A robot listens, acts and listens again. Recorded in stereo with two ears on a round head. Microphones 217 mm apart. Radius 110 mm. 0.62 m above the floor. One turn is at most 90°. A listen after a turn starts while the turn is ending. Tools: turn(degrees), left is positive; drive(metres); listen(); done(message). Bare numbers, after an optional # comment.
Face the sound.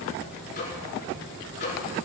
# The microwave: about 45° left or 135° left.
turn(45)
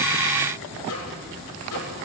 # So it is at 90° left.
turn(90)
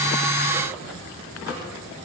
listen()
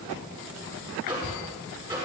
# The microwave is now 20° right.
turn(-20)
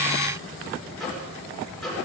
done("Found it: a microwave, straight ahead, over 4 m away.")